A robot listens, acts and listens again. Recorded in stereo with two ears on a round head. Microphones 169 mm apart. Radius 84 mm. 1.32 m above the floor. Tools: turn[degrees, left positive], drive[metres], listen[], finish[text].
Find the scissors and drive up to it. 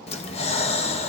Action: listen[]
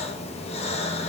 Action: listen[]
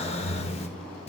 Action: finish[I can't make out scissors, only breathing.]